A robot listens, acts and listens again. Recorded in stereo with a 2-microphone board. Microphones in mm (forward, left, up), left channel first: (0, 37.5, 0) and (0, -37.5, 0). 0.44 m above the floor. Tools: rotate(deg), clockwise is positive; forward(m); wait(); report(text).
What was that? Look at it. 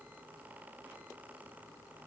wait()
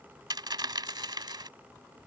rotate(90)
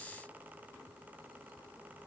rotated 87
report("I heard a dropped coin from this way, but can't make it out now.")